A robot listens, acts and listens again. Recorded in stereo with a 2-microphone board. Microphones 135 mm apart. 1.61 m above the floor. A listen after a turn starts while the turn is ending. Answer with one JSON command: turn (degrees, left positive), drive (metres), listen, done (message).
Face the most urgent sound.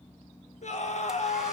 {"turn": 60}
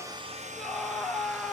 {"done": "Facing the scream."}